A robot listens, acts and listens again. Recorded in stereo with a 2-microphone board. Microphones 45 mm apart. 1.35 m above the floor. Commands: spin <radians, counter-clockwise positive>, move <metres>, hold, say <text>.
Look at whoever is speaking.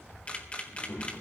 spin 1.13
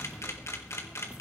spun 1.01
hold
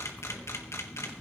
say Facing the child speaking, over 4 m away.